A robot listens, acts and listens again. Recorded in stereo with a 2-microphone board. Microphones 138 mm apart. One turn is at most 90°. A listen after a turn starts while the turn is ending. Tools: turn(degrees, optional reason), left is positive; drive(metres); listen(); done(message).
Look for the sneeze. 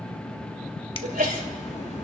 turn(degrees=-90)
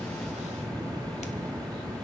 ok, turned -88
done("I heard a sneeze from this way, but can't make it out now.")